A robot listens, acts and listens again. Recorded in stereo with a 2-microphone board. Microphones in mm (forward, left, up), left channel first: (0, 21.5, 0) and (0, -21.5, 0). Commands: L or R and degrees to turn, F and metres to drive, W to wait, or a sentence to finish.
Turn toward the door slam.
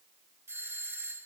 W
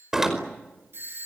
R30
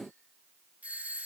W
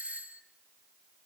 I heard a door slam, but can't make it out now. It was about 20° left or 140° right.